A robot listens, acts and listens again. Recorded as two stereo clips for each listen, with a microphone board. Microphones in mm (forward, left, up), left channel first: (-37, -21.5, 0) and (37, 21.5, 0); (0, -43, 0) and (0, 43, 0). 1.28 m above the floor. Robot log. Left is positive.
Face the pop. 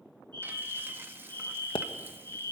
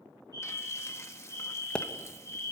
note: The pop: 165° right.
cmd yaw -165
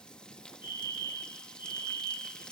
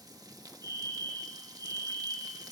end: I heard a pop from this way, but can't make it out now.